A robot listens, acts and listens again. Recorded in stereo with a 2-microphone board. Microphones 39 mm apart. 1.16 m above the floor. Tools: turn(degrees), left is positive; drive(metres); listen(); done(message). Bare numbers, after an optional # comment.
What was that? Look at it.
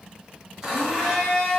turn(-30)
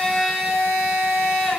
# So it is at 15° left.
turn(15)
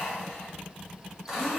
done("Found it: a blender, straight ahead, 1 to 2 m away.")